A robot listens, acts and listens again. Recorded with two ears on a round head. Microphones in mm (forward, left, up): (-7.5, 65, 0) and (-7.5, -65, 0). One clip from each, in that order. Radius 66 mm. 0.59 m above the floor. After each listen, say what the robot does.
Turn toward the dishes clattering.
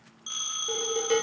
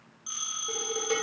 Turn 30° left.
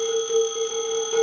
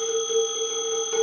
Turn 15° right.
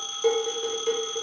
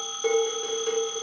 Facing the dishes clattering.